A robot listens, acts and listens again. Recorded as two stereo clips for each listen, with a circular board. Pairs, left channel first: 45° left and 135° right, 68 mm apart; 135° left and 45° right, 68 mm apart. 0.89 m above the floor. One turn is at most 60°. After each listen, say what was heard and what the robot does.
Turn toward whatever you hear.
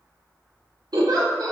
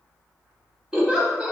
The giggle: 120° right. Turn 60° right.
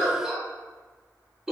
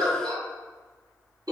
The giggle is now 55° right. Turn 55° right.
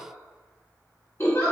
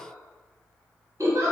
Facing the giggle, under 1 m away.